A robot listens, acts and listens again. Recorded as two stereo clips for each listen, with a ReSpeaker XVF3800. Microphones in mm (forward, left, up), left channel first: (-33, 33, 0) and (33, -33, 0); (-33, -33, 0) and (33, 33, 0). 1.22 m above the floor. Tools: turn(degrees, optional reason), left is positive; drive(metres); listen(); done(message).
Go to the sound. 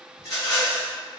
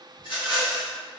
turn(degrees=-170, reason="The rattle: 170° right.")
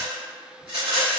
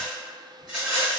turn(degrees=-35, reason="The rattle is now 35° right.")
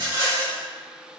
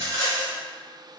drive(metres=1.0)
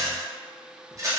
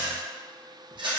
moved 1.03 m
turn(degrees=10, reason="The rattle is now 10° left.")
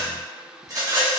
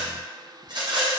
drive(metres=1.0)
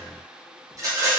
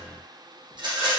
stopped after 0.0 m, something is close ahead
turn(degrees=10, reason="The rattle is now 10° left.")
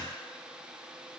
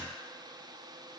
listen()
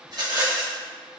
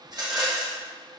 done("I am next to the rattle.")